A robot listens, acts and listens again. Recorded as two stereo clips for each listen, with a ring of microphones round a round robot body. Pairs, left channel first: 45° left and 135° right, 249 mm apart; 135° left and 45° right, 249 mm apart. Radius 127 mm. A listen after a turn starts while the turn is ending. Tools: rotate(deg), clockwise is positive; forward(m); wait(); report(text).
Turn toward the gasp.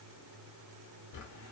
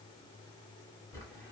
wait()
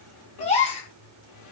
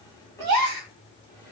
rotate(20)
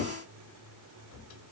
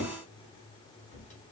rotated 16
report("Facing where the gasp came from. I can't hear it now.")